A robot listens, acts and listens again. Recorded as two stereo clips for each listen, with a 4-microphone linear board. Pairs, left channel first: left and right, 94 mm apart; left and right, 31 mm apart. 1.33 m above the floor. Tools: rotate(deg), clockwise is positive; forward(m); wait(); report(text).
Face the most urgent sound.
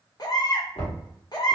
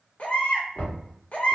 rotate(-45)
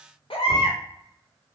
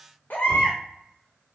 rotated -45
rotate(-90)
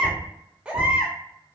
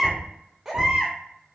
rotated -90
rotate(15)
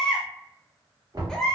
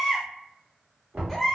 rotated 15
report("Facing the baby crying.")